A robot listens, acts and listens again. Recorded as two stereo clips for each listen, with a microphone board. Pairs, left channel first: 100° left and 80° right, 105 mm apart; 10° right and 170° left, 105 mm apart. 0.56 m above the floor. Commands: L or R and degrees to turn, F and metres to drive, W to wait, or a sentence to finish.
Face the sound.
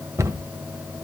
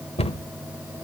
R15
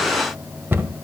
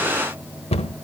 R10
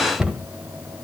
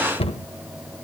Facing the cupboard door, 1 to 2 m away.